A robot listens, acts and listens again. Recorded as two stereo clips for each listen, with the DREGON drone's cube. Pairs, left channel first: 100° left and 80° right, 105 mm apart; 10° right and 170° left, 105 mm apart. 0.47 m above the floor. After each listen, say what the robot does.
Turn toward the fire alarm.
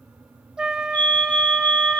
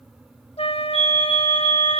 Turn 175° left.
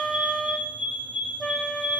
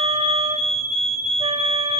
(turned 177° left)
Facing the fire alarm, over 4 m away.